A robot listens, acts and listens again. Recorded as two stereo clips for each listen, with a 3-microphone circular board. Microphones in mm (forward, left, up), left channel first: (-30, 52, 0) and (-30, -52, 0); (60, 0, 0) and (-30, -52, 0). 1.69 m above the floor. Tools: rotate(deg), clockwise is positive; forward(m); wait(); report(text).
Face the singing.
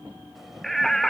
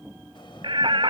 rotate(-180)
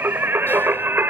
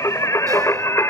rotate(25)
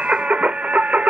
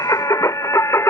rotate(20)
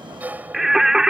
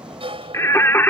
rotate(15)
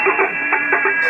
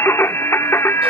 report("Found it: singing, straight ahead.")